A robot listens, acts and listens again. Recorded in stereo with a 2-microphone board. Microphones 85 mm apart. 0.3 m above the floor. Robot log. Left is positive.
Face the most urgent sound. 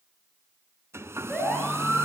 cmd yaw +30
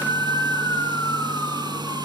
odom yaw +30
note: So it is at 140° left.
cmd yaw +140
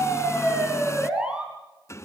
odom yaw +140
note: The siren is now 10° right.
cmd yaw -10
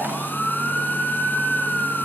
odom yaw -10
end: Found it: a siren, straight ahead.